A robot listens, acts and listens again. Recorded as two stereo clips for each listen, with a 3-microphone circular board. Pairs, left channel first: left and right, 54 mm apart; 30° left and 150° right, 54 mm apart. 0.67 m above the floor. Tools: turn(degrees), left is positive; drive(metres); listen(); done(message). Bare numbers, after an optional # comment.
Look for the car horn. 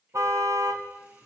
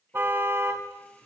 # The car horn: 105° right.
turn(-105)
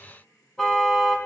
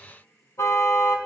# The car horn is now 10° left.
turn(10)
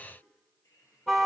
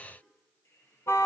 done("Facing the car horn, 2 to 4 m away.")